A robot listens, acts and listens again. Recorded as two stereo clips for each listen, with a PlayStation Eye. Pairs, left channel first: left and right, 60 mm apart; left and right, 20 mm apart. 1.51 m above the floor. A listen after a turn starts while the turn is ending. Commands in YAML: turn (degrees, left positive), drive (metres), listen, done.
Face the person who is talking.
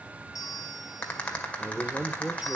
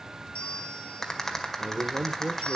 turn: -25
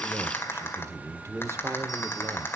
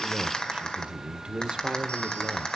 turn: -130
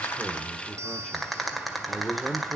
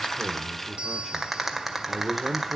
done: "Found it: a man speaking, straight ahead, 1 to 2 m away."